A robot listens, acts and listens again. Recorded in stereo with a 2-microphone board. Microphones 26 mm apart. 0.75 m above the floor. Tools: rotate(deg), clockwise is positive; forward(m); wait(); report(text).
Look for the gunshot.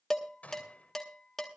rotate(-90)
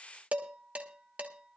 report("I heard a gunshot from this way, but can't make it out now.")